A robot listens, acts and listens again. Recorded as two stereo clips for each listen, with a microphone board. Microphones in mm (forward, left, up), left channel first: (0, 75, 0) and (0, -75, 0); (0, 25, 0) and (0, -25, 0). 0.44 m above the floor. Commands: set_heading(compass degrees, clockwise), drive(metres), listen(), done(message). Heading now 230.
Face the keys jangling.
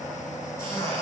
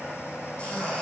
listen()
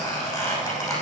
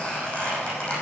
listen()
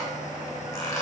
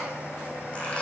done("I can't make out keys jangling to turn to.")